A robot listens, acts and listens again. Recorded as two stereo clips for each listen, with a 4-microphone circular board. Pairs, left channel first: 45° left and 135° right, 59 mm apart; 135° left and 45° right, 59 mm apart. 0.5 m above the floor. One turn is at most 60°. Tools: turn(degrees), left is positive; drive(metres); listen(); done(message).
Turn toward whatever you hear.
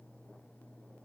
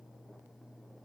listen()
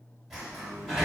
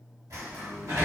turn(degrees=-50)
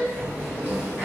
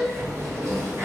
turn(degrees=-10)
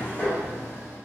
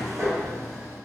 done("Facing the sliding door.")